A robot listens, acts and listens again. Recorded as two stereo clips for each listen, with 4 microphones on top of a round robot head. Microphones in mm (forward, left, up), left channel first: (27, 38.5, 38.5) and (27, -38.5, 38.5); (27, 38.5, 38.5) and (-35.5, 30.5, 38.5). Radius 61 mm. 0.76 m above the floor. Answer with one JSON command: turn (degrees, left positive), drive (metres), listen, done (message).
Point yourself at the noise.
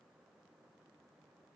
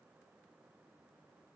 {"listen": true}
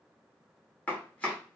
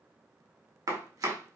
{"turn": 165}
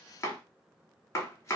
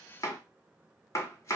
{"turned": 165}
{"turn": 40}
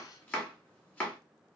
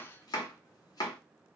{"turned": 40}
{"turn": 20}
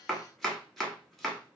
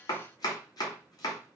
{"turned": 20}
{"done": "Facing the chopping, 1 to 2 m away."}